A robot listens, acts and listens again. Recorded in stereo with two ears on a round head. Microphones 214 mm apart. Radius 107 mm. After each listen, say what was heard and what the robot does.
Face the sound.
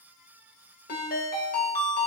The ringtone: about 40° left or 140° left. Turn 40° left.
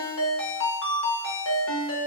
So it is at 95° left. Turn 95° left.
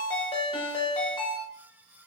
The ringtone is now 25° left. Turn 25° left.
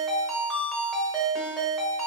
Facing the ringtone, under 1 m away.